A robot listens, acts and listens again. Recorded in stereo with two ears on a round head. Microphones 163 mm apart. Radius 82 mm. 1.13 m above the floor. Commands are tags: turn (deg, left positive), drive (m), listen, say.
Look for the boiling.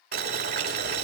<turn deg="-50"/>
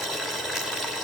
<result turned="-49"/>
<say>Found it: boiling, straight ahead, 2 to 4 m away.</say>